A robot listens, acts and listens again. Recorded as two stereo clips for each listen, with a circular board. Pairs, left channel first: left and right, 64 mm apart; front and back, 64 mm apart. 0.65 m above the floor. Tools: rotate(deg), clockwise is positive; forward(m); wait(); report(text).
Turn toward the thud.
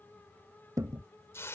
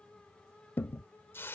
rotate(60)
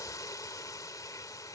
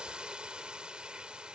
report("Facing where the thud came from. I can't hear it now.")